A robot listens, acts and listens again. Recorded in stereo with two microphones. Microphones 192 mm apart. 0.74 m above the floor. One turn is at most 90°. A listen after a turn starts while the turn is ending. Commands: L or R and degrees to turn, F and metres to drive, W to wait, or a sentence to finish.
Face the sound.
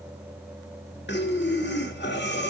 L70
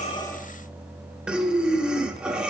Facing the breathing.